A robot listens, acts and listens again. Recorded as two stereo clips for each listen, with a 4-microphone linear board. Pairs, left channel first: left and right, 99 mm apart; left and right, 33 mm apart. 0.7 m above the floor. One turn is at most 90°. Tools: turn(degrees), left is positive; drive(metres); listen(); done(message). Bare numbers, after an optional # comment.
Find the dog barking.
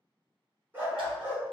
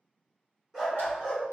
# The dog barking: about 25° right or 155° right.
turn(-25)
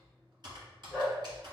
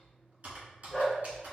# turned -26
turn(-30)
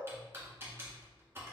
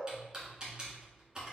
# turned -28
listen()
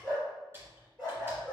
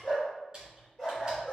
done("Found it: a dog barking, straight ahead, 2 to 4 m away.")